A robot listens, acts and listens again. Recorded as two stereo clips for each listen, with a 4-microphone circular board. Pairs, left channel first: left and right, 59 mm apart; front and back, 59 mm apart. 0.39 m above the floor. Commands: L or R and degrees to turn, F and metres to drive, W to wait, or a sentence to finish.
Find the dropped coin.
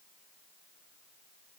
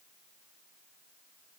W
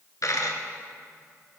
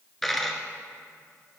L85
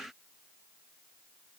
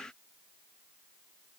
Facing where the dropped coin came from. I can't hear it now.